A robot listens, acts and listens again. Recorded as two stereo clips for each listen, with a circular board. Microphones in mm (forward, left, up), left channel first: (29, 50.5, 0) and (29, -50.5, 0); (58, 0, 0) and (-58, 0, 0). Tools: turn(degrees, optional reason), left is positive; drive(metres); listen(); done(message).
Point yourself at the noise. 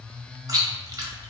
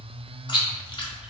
turn(degrees=-40, reason="The chewing: 40° right.")
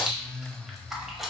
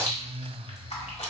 done("Found it: chewing, straight ahead, 1 to 2 m away.")